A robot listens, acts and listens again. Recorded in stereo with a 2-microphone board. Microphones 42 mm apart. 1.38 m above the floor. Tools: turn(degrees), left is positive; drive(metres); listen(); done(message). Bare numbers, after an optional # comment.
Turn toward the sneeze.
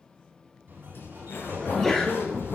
turn(30)
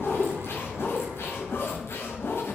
listen()
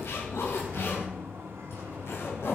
done("I heard a sneeze, but can't make it out now. It was about 25° right or 145° left.")